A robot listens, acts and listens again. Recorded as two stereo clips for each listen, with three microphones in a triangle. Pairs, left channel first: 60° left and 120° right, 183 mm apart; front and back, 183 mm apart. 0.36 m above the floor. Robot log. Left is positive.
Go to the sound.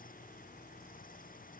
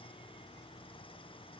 cmd idle
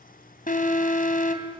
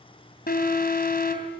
note: The alarm: 25° left.
cmd yaw +25
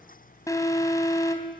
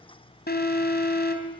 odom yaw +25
note: The alarm is now 10° right.
cmd yaw -10
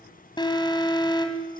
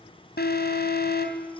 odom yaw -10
cmd fwd 1.0
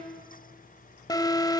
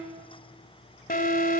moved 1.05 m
cmd fwd 1.0
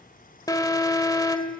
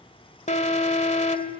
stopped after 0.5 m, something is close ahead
end: I am next to the alarm.